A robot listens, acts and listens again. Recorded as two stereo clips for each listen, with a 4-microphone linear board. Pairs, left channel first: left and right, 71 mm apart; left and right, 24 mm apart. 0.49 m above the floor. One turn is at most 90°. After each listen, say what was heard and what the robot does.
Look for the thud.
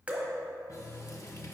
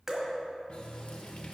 Keep listening.
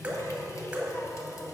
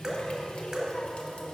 Keep listening.
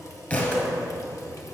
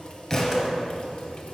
The thud: about 25° left or 155° left. Turn 25° left.
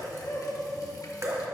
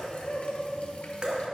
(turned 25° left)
Keep listening.
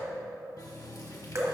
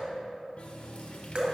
I heard a thud, but can't make it out now. It was about straight ahead or 130° left.